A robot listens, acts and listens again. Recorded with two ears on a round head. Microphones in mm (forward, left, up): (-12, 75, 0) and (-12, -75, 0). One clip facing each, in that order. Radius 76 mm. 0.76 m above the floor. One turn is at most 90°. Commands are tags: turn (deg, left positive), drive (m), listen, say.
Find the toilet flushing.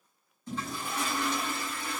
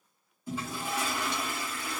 <turn deg="-30"/>
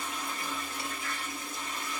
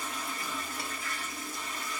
<turn deg="20"/>
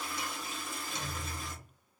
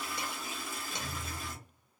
<say>Facing the toilet flushing, 1 to 2 m away.</say>